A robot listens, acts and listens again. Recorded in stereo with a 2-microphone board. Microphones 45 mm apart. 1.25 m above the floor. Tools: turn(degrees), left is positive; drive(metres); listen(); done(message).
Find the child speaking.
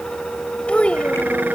turn(degrees=25)
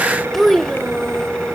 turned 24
turn(degrees=10)
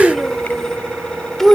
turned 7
turn(degrees=10)
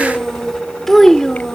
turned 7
turn(degrees=15)
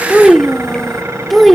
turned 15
done("Found it: a child speaking, straight ahead.")